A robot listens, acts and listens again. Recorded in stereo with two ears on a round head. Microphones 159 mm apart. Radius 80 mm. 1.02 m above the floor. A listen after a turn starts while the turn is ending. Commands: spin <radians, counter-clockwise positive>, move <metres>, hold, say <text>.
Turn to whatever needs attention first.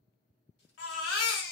spin 1.22
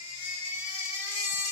spin 0.70
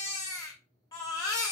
spin 0.35
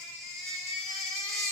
say Found it: a baby crying, straight ahead, under 1 m away.